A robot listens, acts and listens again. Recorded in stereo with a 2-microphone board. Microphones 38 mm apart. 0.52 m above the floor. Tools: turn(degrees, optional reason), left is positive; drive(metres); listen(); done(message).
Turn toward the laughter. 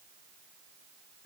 listen()
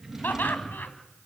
turn(degrees=60, reason="The laughter: about 60° left or 120° left.")
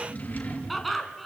done("Found it: laughter, straight ahead.")